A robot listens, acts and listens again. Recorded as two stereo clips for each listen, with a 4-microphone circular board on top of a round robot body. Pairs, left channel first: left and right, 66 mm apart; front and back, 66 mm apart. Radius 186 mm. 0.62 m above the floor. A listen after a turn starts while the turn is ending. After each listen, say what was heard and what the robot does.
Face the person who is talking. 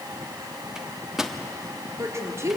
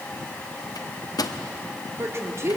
The woman speaking: 135° right. Turn 135° right.
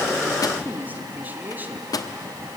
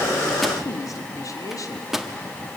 The woman speaking is now 30° right. Turn 30° right.
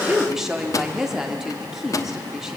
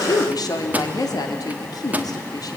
The woman speaking is now 10° right. Turn 10° right.
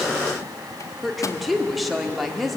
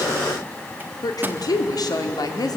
Found it: a woman speaking, straight ahead.